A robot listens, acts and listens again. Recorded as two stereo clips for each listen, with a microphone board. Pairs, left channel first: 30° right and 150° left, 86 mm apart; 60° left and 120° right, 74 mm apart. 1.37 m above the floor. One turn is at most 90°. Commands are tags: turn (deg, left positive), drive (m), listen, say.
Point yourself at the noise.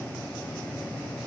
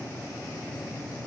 <listen/>
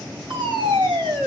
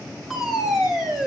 <turn deg="90"/>
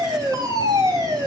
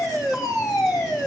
<turn deg="90"/>
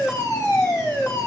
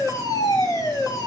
<turn deg="20"/>
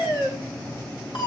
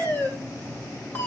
<say>Facing the fire alarm, over 4 m away.</say>